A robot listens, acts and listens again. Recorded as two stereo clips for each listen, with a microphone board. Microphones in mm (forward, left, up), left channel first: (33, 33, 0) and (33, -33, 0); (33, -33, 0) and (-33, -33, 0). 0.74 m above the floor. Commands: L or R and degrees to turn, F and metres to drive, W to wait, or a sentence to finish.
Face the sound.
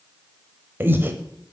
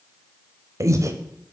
R145
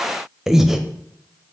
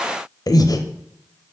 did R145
Found it: breathing, straight ahead.